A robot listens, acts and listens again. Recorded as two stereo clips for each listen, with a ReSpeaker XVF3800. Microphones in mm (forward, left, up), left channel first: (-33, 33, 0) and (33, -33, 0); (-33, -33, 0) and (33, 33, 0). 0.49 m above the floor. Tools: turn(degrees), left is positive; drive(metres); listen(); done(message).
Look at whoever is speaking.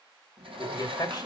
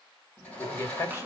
turn(degrees=175)
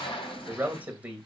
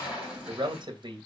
turn(degrees=25)
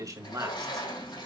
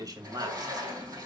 done("Facing the man speaking.")